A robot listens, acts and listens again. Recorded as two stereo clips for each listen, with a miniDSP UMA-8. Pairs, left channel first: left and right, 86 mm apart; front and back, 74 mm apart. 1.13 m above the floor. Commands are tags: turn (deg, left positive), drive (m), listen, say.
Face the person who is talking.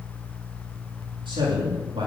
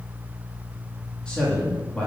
<turn deg="-75"/>
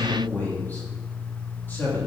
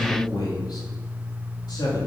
<turn deg="20"/>
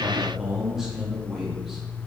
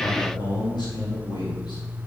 <say>Facing the man speaking.</say>